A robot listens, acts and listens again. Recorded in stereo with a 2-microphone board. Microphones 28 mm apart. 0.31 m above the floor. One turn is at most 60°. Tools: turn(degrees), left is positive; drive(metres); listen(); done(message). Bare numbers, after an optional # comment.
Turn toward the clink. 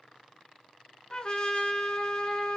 listen()
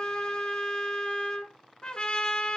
listen()
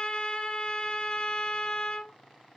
done("I can't make out a clink to turn to.")